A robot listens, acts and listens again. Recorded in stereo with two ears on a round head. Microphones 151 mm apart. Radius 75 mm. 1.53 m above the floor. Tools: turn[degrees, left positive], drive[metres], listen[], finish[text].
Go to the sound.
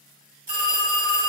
Thought: The phone ringing: about 50° right or 130° right.
Action: turn[-50]
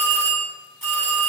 Action: drive[1.0]
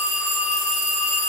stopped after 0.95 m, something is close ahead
Action: finish[Arrived at the phone ringing, straight ahead.]